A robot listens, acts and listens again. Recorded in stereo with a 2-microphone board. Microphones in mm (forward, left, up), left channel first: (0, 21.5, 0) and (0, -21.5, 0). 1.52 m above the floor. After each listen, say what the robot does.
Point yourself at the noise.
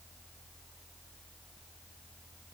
Keep listening.
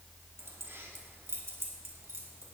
Turn 90° right.
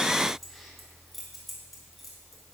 Facing the keys jangling, 2 to 4 m away.